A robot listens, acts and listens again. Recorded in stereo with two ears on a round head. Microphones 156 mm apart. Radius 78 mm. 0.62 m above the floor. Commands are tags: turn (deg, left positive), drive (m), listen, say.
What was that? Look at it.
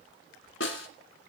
<turn deg="90"/>
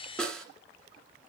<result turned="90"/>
<say>Facing the snare drum.</say>